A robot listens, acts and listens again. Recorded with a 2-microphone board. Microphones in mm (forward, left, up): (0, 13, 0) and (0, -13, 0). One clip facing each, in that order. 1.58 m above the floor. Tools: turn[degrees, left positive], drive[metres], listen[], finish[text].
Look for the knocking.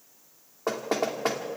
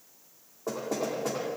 Thought: The knocking: about 65° left or 115° left.
Action: turn[65]
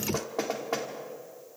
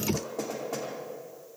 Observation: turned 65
Thought: So it is at 45° left.
Action: turn[45]
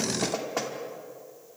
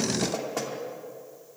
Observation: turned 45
Thought: The knocking is now 15° left.
Action: turn[15]
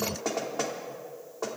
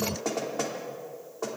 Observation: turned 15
Action: finish[Found it: knocking, straight ahead, 2 to 4 m away.]